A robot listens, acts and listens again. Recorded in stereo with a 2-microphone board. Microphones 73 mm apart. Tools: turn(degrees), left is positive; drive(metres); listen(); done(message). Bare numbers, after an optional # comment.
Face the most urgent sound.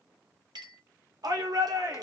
# The shout: about 60° right or 120° right.
turn(-60)
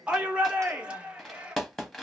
# So it is at 15° right.
turn(-15)
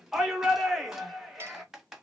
done("Found it: a shout, straight ahead.")